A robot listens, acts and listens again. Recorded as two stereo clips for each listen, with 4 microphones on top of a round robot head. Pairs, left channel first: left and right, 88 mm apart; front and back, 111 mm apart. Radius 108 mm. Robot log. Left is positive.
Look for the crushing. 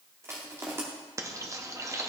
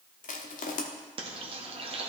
note: The crushing: 20° right.
cmd yaw -20
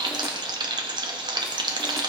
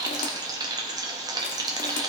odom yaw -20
cmd idle
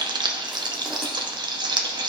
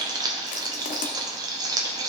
cmd idle
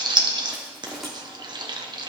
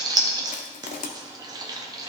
end: Found it: crushing, straight ahead, under 1 m away.